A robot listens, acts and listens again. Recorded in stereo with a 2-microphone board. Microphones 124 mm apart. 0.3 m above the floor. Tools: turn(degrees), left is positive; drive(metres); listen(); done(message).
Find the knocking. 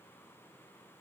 listen()
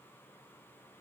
listen()
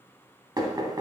turn(degrees=-35)
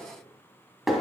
done("Found it: knocking, straight ahead.")